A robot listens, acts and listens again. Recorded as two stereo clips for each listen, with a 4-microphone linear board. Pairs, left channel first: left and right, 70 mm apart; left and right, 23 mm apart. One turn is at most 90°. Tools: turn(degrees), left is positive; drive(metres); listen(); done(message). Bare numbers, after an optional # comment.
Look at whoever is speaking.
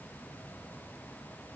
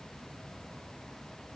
listen()
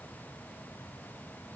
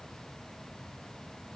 listen()
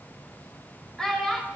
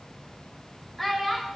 turn(30)
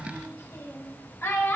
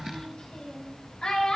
# So it is at 140° left.
turn(90)
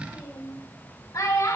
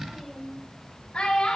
# The child speaking is now 50° left.
turn(50)
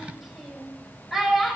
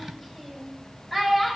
done("Facing the child speaking.")